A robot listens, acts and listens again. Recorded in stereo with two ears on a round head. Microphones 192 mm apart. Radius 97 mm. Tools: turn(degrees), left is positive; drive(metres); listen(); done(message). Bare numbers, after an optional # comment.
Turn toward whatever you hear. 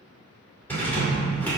turn(30)
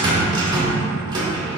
# So it is at 20° right.
turn(-20)
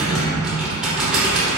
done("Found it: a rattle, straight ahead, 2 to 4 m away.")